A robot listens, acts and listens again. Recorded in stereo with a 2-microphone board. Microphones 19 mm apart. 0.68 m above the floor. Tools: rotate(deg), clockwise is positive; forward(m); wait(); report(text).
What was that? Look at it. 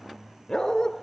rotate(-40)
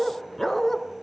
rotate(-10)
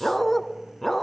rotate(-15)
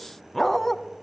rotate(-15)
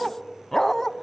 rotate(-25)
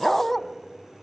rotate(-10)
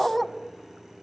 report("Found it: a dog barking, straight ahead, 1 to 2 m away.")